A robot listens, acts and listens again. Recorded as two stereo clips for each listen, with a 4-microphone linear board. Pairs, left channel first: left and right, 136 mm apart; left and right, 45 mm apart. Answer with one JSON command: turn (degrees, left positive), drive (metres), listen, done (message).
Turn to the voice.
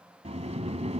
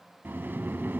{"listen": true}
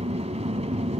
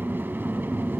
{"listen": true}
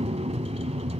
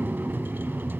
{"done": "I can't make out anyone speaking, only a sliding door."}